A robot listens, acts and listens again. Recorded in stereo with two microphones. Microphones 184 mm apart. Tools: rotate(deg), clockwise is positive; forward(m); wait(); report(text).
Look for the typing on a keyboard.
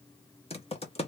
rotate(-35)
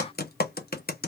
rotate(-110)
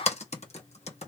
rotate(-40)
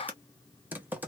rotate(10)
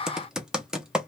report("Found it: typing on a keyboard, straight ahead, under 1 m away.")